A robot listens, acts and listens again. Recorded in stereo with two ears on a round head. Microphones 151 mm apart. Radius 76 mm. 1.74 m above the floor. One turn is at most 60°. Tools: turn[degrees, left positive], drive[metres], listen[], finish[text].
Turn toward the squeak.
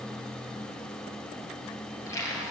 Thought: The squeak: about 20° left or 160° left.
Action: turn[20]
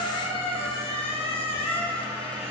Thought: So it is at 145° left.
Action: turn[60]
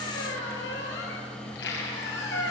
Thought: The squeak is now 90° left.
Action: turn[60]
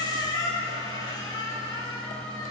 Thought: The squeak is now 20° left.
Action: turn[20]
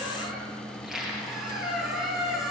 Action: finish[Facing the squeak, over 4 m away.]